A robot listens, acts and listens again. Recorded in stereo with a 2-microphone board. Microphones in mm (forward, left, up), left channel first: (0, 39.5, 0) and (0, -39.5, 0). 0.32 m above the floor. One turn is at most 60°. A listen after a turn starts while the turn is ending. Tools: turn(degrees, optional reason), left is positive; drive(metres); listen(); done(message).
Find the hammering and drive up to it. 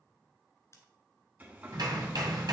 turn(degrees=-60, reason="The hammering: about 60° right or 120° right.")
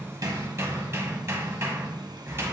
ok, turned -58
turn(degrees=-40, reason="So it is at 40° right.")
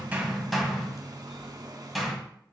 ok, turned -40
drive(metres=1.0)
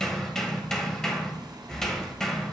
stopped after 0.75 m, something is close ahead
turn(degrees=10, reason="The hammering is now 10° left.")
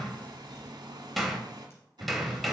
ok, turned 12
done("Arrived at the hammering, straight ahead.")